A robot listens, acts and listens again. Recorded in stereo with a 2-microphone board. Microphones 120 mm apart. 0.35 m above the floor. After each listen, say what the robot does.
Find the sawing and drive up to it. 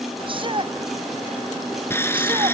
Turn 20° left.
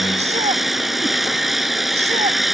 Drive 1.0 m forward.
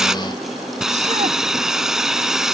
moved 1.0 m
Drive 1.0 m forward.
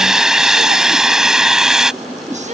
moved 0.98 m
Drive 1.0 m forward.
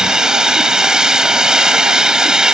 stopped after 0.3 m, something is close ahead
Arrived at the sawing, straight ahead.